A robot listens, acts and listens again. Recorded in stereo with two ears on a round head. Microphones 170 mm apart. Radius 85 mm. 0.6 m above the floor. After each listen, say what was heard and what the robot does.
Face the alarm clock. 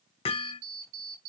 Turn 90° right.
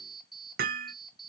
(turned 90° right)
Facing the alarm clock.